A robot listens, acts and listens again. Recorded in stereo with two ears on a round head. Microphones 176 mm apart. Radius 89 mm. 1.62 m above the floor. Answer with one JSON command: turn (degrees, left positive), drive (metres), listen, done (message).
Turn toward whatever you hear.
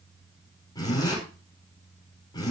{"turn": 20}
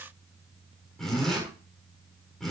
{"done": "Found it: a zipper, straight ahead, over 4 m away."}